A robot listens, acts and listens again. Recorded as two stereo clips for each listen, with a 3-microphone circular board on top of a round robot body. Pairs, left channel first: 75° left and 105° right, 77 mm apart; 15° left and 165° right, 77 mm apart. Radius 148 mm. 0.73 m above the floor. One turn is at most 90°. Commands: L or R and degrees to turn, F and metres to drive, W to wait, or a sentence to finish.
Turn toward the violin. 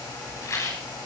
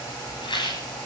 W
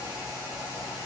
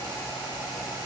W
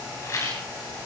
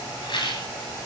I can't make out a violin, only a rattle.